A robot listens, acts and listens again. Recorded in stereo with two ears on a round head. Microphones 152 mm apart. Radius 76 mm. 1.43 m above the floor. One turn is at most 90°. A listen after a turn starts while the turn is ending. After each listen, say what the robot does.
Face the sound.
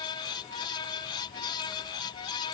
Keep listening.
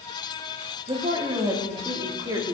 Turn 25° right.
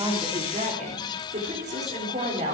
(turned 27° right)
Turn 90° right.
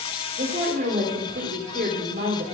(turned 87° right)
Turn 50° right.
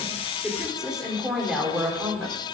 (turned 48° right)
Found it: a woman speaking, straight ahead, 2 to 4 m away.